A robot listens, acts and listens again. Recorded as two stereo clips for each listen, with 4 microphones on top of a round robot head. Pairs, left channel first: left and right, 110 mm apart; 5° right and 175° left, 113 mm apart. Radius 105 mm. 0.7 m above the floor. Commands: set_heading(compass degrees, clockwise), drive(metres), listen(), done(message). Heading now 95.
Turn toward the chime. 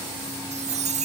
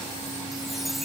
set_heading(190)
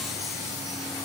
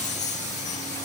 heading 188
listen()
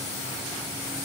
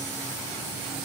listen()
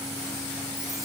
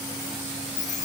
done("Found it: a chime, straight ahead.")